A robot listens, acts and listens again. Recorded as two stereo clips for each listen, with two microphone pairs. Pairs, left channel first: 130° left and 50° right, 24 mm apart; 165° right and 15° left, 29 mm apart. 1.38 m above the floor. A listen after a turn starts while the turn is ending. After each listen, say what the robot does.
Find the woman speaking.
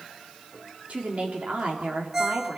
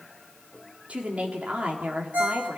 Turn 25° right.
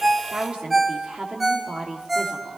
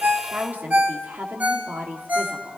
Found it: a woman speaking, straight ahead, 2 to 4 m away.